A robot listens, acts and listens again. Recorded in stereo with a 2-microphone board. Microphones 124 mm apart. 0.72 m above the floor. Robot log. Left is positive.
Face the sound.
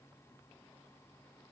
cmd idle
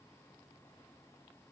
cmd idle
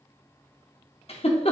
note: The giggle: about 50° left or 130° left.
cmd yaw +50
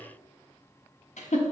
note: So it is at 80° left.
cmd yaw +80
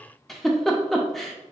end: Facing the giggle.